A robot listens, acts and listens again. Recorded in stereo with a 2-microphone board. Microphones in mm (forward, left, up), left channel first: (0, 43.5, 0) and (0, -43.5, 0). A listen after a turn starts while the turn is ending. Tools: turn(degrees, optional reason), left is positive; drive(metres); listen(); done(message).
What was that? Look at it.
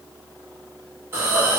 turn(degrees=-30, reason="The hiss: about 30° right or 150° right.")
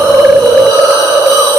turn(degrees=-115, reason="So it is at 115° right.")
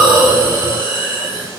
turn(degrees=-30, reason="The hiss is now 30° right.")
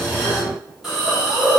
done("Found it: a hiss, straight ahead.")